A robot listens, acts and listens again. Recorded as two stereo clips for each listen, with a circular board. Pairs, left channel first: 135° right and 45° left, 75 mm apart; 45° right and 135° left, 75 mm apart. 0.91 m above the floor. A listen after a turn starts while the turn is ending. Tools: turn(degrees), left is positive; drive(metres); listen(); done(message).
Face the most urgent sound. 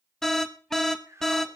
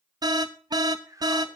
turn(degrees=140)
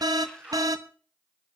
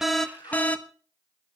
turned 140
turn(degrees=20)
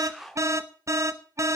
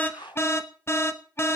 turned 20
done("Facing the alarm.")